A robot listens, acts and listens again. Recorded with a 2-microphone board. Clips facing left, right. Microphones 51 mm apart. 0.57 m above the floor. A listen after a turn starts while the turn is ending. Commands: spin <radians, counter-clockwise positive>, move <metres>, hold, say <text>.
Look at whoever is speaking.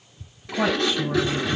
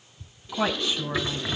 spin -0.52
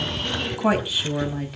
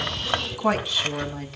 spin 0.17
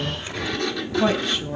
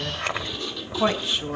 spin -0.17
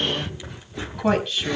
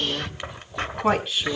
spin -0.17
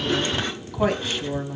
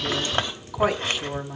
spin -0.17
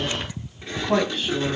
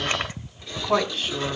say Facing the woman speaking, 2 to 4 m away.